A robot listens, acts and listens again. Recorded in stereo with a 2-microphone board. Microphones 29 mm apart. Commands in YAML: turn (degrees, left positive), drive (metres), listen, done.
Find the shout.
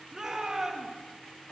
turn: -30
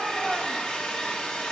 turn: 15
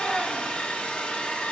listen: true
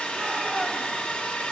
done: "Found it: a shout, straight ahead, 2 to 4 m away."